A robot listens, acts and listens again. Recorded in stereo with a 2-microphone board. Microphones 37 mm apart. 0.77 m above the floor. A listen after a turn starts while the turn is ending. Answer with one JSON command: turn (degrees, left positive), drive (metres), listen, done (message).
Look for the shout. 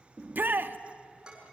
{"turn": -60}
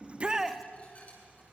{"turn": -10}
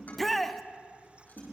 {"done": "Found it: a shout, straight ahead."}